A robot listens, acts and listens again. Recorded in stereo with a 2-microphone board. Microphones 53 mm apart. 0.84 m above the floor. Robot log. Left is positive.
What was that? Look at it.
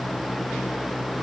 cmd idle
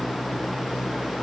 cmd idle
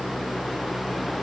end: I can't make out anything to turn to.